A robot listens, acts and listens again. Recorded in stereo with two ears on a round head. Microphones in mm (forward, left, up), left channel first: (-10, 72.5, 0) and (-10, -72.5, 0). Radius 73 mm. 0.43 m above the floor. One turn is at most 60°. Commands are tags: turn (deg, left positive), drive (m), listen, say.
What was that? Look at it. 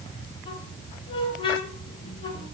<turn deg="30"/>
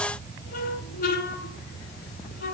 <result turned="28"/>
<turn deg="60"/>
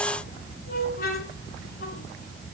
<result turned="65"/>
<turn deg="55"/>
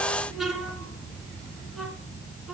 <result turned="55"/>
<say>Facing the squeak, 2 to 4 m away.</say>